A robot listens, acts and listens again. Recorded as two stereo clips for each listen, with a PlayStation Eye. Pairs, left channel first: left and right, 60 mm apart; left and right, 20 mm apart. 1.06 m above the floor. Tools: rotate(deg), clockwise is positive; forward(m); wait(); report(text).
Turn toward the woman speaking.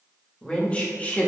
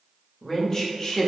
rotate(-30)
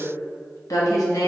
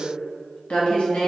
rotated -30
rotate(-100)
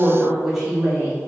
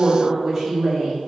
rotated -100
rotate(10)
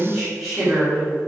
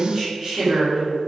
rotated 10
rotate(10)
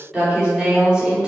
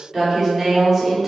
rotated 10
report("Found it: a woman speaking, straight ahead.")